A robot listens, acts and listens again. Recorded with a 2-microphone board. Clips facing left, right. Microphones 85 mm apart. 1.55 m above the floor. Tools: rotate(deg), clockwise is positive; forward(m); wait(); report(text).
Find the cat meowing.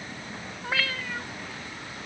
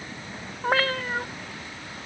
rotate(45)
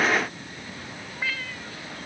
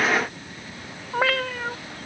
rotate(90)
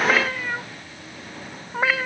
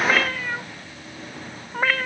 report("Found it: a cat meowing, straight ahead.")